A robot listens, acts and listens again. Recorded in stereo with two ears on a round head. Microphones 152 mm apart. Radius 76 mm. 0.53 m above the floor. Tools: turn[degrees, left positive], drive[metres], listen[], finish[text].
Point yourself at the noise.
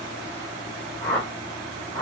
Action: turn[30]
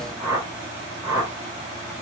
Thought: So it is at 20° right.
Action: turn[-20]
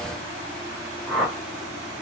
Action: finish[Facing the whoosh, 1 to 2 m away.]